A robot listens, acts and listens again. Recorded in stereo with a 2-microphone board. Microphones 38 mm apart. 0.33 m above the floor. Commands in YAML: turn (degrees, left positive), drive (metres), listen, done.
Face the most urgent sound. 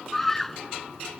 turn: 30
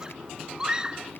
turn: -20
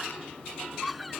done: "Facing the scream."